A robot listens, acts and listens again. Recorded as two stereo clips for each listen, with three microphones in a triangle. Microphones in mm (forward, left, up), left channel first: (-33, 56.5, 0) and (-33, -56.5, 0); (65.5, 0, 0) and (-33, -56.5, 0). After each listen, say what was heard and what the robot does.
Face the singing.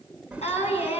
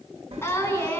The singing: 100° left. Turn 100° left.
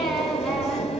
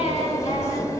Keep listening.
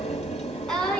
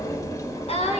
Found it: singing, straight ahead, over 4 m away.